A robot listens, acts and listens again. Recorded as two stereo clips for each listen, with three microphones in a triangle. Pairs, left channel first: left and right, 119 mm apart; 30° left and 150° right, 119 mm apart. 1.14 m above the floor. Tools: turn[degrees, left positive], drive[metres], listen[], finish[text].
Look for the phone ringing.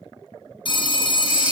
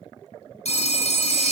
Thought: The phone ringing: 50° left.
Action: turn[50]
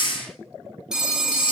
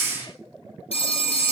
Action: finish[Facing the phone ringing, under 1 m away.]